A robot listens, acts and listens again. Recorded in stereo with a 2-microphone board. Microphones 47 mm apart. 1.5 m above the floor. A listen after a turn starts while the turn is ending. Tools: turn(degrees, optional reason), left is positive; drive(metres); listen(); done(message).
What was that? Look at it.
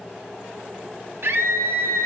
turn(degrees=-60, reason="The scream: about 60° right or 120° right.")
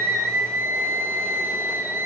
turn(degrees=-65, reason="So it is at 65° right.")
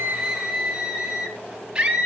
turn(degrees=-25, reason="The scream is now 25° right.")
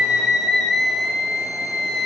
done("Found it: a scream, straight ahead.")